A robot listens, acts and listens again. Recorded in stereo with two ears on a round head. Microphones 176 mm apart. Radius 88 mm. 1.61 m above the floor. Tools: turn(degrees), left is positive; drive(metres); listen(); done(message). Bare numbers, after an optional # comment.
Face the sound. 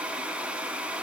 listen()
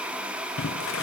# The boiling: about 70° left or 110° left.
turn(70)
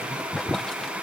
done("Facing the boiling.")